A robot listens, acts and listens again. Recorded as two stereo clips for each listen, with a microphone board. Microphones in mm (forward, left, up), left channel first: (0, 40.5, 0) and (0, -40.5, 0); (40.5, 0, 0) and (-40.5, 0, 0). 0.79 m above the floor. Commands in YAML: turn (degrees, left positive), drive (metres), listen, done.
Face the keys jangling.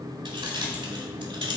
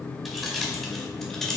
turn: -80
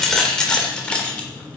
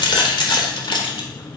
turn: 15
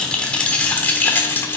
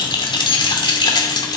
turn: 30
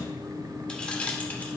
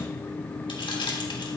turn: 15
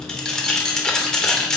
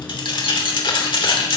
turn: 10
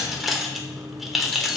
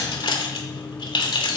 done: "Facing the keys jangling."